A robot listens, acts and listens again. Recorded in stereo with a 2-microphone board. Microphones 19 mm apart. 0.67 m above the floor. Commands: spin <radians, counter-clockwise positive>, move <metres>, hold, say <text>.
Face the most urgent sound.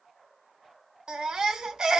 spin -0.70
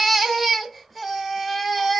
say Facing the baby crying, under 1 m away.